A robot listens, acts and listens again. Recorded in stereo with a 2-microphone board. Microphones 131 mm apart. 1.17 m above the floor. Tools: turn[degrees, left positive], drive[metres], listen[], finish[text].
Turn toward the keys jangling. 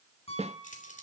Action: turn[90]
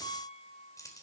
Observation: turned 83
Thought: So it is at 25° left.
Action: turn[25]
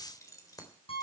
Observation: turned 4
Thought: The keys jangling is now 25° left.
Action: turn[25]
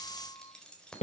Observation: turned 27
Action: finish[Found it: keys jangling, straight ahead, 2 to 4 m away.]